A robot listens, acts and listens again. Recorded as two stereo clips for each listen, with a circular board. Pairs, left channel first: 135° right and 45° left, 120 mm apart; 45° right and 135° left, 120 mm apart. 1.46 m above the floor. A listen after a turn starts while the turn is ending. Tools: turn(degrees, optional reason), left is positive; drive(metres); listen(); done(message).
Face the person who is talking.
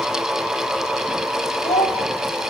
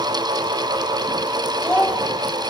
turn(degrees=-125, reason="The child speaking: 125° right.")
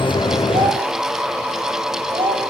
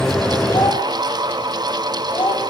done("Facing the child speaking.")